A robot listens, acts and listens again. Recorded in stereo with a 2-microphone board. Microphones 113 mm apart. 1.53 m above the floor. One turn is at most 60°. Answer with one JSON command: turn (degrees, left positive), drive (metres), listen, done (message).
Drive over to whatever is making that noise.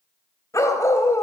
{"turn": 25}
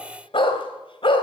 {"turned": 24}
{"turn": 60}
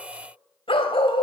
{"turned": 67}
{"turn": 60}
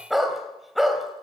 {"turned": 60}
{"drive": 1.0}
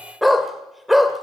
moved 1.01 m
{"drive": 1.0}
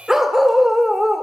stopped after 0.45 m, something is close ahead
{"done": "Arrived at the dog barking, straight ahead."}